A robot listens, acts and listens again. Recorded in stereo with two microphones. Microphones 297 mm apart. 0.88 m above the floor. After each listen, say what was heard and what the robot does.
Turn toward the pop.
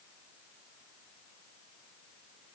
Keep listening.
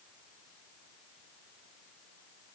Keep listening.
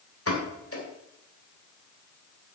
The pop: about 50° left or 130° left. Turn 50° left.
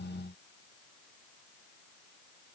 Keep listening.
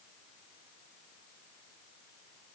I heard a pop, but can't make it out now. It was about straight ahead or 80° left.